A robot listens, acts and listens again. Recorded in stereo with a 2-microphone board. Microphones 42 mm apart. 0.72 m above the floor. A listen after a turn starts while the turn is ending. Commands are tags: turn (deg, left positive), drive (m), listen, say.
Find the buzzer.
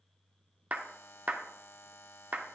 <turn deg="60"/>
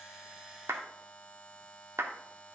<turn deg="35"/>
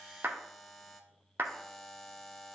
<say>Found it: a buzzer, straight ahead.</say>